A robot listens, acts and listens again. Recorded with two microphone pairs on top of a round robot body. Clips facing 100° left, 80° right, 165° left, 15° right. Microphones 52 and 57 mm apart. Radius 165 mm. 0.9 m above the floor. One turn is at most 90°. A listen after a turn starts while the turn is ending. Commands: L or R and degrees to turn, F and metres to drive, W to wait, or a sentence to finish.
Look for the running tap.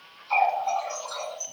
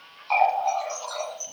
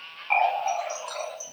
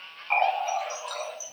R90
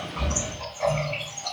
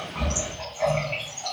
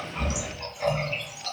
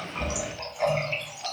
R50
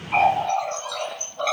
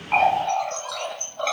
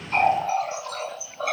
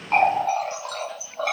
L10
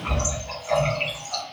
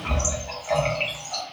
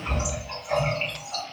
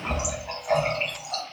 Facing the running tap, under 1 m away.